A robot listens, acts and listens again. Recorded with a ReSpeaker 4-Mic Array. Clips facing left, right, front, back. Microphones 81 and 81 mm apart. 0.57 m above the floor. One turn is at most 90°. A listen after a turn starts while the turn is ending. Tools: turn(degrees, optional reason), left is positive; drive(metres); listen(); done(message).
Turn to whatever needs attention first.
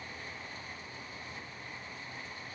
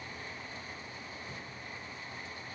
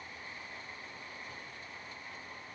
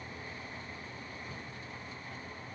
listen()
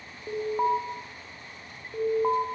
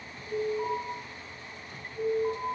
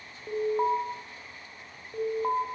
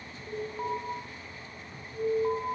turn(degrees=50, reason="The alarm: 50° left.")
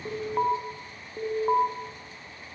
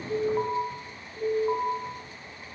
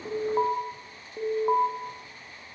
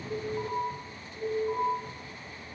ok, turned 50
turn(degrees=25, reason="The alarm is now 25° left.")
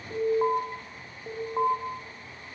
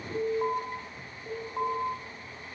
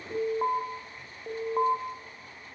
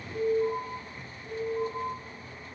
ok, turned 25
turn(degrees=20, reason="The alarm is now 20° left.")
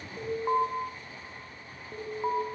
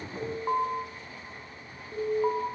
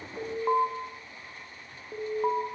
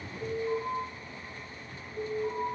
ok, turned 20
done("Facing the alarm, over 4 m away.")